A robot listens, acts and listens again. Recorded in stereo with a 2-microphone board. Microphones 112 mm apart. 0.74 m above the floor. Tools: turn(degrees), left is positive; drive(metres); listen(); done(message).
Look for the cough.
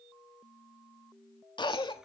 turn(degrees=45)
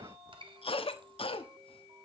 turn(degrees=80)
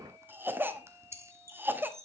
turn(degrees=-25)
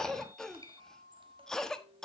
done("Facing the cough, 1 to 2 m away.")